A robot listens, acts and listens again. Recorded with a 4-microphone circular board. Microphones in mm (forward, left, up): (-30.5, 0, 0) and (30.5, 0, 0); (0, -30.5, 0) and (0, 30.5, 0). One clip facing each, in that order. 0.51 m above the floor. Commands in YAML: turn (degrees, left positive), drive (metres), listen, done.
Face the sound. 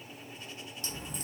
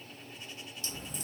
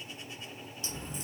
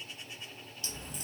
turn: -145
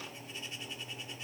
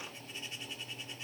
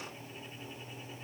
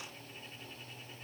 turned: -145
done: "I heard a crack from this way, but can't make it out now."